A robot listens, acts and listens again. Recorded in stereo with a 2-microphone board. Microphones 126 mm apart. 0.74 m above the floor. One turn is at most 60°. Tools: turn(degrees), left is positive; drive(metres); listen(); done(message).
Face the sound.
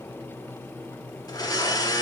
turn(degrees=35)
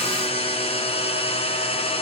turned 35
turn(degrees=60)
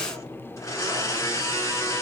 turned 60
turn(degrees=30)
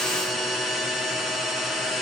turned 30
done("Found it: a blender, straight ahead.")